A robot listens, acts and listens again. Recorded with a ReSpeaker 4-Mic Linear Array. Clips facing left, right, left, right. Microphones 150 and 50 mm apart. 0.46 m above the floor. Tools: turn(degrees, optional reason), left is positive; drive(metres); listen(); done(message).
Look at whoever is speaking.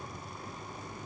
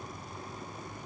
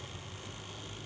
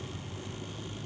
listen()
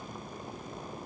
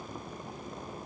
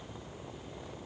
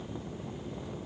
listen()
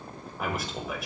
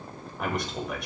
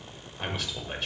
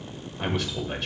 turn(degrees=30)
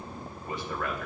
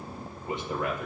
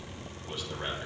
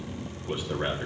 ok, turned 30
turn(degrees=-25, reason="So it is at 25° right.")
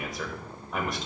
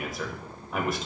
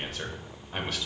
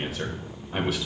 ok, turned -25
done("Found it: a man speaking, straight ahead, 1 to 2 m away.")